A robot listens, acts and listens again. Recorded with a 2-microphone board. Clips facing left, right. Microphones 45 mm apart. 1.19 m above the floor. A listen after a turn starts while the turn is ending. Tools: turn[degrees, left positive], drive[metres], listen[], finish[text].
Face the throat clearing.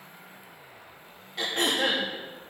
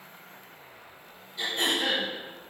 Thought: The throat clearing: about 75° left or 105° left.
Action: turn[75]
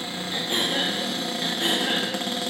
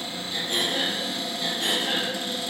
Thought: So it is at 30° left.
Action: turn[30]
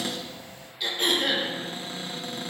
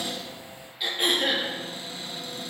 Thought: The throat clearing is now 10° right.
Action: turn[-10]
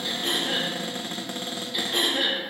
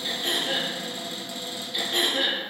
Action: finish[Facing the throat clearing, 2 to 4 m away.]